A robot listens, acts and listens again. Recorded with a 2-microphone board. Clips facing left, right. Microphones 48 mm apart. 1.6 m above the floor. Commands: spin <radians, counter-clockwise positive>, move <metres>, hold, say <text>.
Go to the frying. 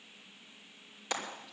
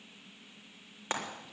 spin -0.61
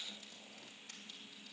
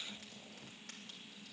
hold
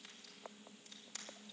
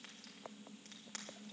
hold
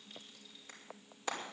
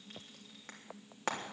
spin -1.83
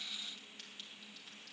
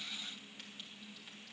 hold
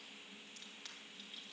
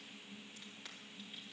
hold
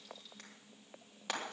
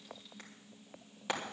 spin -0.17
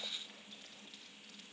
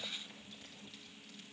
hold
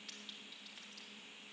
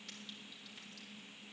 hold
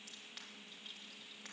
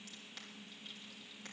say Facing where the frying came from. I can't hear it now. I did not reach it.